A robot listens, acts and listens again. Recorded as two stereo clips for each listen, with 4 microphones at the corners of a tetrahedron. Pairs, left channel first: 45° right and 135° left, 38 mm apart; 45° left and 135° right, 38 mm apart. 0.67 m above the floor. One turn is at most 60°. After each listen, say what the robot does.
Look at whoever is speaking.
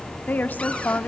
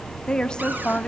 Turn 20° right.
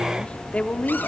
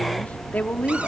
Facing the woman speaking.